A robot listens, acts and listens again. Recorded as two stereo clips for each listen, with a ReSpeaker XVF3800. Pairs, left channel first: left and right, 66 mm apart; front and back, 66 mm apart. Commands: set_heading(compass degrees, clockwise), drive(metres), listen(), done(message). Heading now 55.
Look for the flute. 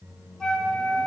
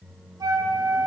set_heading(245)
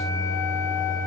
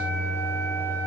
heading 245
listen()
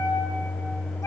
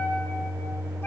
listen()
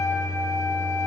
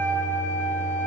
set_heading(190)
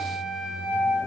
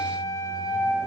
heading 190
set_heading(200)
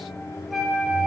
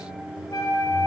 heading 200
done("Facing the flute.")